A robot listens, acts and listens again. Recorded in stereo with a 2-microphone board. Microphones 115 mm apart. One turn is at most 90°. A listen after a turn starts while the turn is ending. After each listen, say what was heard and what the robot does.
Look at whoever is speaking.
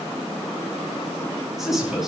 Turn 30° right.
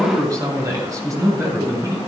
So it is at 150° right. Turn 90° right.
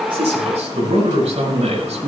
The man speaking is now 70° right. Turn 70° right.
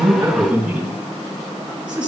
The man speaking is now 10° right. Turn 10° right.
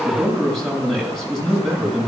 Facing the man speaking.